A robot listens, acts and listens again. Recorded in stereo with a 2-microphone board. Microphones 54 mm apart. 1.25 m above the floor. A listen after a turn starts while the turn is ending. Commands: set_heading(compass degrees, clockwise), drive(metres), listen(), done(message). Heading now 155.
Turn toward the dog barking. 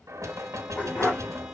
set_heading(130)
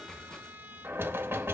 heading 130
listen()
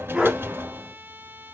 done("Facing the dog barking, over 4 m away.")